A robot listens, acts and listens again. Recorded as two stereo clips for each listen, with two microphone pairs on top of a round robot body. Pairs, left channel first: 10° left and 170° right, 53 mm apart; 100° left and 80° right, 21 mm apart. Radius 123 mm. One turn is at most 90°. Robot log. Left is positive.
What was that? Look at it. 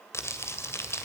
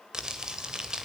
note: The crumpling: 15° right.
cmd yaw -15
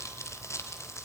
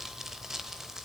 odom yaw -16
end: Facing the crumpling, 2 to 4 m away.